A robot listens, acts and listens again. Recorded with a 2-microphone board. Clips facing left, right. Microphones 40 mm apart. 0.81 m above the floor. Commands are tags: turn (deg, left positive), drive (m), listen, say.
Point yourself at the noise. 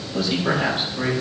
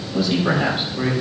<turn deg="-30"/>
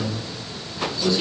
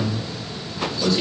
<turn deg="-135"/>
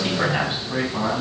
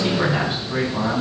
<turn deg="10"/>
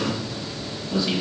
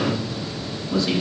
<say>Found it: a man speaking, straight ahead.</say>